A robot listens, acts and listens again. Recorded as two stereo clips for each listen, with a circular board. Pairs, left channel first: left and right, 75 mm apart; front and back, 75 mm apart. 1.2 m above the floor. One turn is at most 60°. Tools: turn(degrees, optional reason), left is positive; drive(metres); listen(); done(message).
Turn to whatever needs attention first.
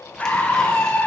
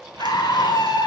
turn(degrees=20, reason="The scream: 20° left.")
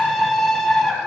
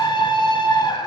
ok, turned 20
done("Found it: a scream, straight ahead.")